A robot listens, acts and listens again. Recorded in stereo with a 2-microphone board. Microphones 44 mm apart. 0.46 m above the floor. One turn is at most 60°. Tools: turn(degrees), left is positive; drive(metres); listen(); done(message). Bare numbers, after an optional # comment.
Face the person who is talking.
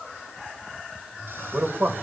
# The man speaking: about 55° right or 125° right.
turn(-55)
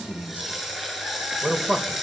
# So it is at 45° right.
turn(-45)
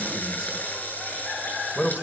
done("Found it: a man speaking, straight ahead, 1 to 2 m away.")